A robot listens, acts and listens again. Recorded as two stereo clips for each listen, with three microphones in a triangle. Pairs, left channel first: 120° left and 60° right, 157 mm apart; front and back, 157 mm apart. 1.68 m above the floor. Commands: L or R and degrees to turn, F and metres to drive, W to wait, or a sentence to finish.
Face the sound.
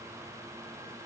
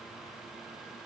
W
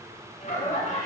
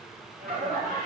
L155
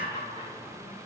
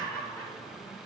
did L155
L75
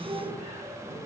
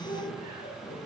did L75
Found it: laughter, straight ahead, 1 to 2 m away.